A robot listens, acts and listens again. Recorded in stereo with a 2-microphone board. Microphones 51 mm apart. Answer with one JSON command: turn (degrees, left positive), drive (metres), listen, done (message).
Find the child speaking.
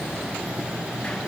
{"listen": true}
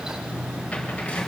{"listen": true}
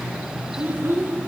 {"turn": -50}
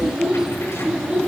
{"turn": -15}
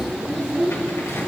{"done": "Facing the child speaking."}